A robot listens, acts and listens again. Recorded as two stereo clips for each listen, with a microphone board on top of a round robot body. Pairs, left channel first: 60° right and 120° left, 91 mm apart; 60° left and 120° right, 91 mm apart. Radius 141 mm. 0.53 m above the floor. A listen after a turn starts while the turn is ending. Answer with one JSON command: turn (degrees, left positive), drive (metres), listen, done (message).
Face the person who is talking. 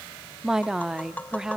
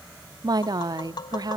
{"turn": -155}
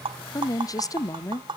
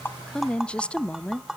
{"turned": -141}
{"turn": -20}
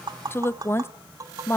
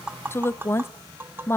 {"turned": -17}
{"done": "Facing the woman speaking, 1 to 2 m away."}